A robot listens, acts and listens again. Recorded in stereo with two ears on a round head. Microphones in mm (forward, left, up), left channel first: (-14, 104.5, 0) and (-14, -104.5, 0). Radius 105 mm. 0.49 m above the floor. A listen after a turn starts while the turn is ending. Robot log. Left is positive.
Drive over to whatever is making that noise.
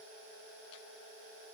cmd idle
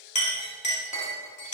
note: The clink: about 30° left or 150° left.
cmd yaw +30
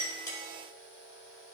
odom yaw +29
cmd idle
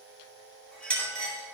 cmd fwd 1.0
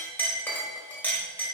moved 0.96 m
note: The clink is now 10° left.
cmd yaw +10
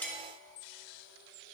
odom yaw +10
cmd idle
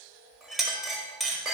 cmd fwd 1.0
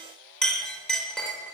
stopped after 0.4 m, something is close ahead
end: I am next to the clink.